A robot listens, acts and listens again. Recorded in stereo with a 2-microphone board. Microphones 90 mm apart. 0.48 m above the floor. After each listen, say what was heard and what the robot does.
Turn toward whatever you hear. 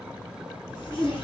The zipper: about 70° left or 110° left. Turn 70° left.
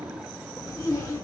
So it is at 40° left. Turn 40° left.
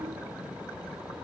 Keep listening.
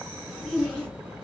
The zipper is now 10° left. Turn 10° left.
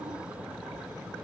Keep listening.
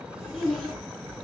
Facing the zipper.